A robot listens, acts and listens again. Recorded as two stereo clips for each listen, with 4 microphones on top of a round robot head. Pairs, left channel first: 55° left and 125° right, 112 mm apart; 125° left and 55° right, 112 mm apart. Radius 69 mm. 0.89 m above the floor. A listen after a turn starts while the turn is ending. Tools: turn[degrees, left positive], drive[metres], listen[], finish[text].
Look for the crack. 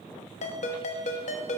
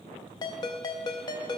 Action: listen[]
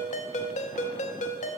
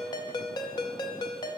Action: listen[]
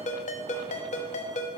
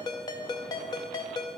Action: finish[I can't make out a crack to turn to.]